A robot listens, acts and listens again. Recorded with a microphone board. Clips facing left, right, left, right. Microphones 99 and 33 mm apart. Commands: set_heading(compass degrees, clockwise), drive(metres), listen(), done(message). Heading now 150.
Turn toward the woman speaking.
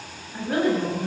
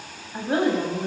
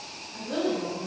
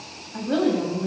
set_heading(175)
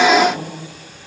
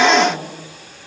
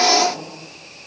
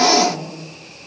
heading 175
set_heading(310)
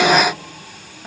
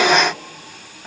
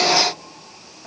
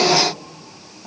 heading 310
done("Facing the woman speaking, over 4 m away.")